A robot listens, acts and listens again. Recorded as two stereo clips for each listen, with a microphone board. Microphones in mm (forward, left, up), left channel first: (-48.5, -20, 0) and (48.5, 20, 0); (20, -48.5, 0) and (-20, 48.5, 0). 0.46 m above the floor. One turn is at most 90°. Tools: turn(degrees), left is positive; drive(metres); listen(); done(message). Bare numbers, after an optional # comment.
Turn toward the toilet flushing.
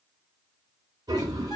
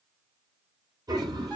# The toilet flushing: 65° left.
turn(65)
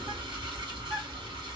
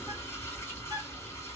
# The toilet flushing is now 10° right.
turn(-10)
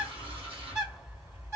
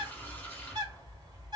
done("Found it: a toilet flushing, straight ahead.")